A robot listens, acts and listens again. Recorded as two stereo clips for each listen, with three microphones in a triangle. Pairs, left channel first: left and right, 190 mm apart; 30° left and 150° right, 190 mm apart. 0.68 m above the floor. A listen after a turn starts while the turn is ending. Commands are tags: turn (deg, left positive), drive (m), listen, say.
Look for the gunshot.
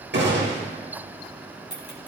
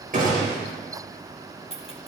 <turn deg="-105"/>
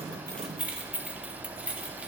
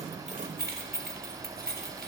<say>I heard a gunshot from this way, but can't make it out now.</say>